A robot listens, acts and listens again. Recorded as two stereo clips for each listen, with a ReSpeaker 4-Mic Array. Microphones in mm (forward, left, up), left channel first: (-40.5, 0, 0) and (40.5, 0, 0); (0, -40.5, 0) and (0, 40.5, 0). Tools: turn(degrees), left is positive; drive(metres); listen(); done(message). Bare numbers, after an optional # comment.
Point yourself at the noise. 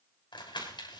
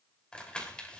# The crumpling: 170° right.
turn(-170)
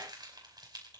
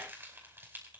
# The crumpling is now 25° left.
turn(25)
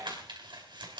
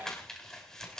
# The crumpling is now 10° right.
turn(-10)
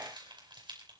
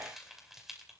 done("Found it: crumpling, straight ahead, over 4 m away.")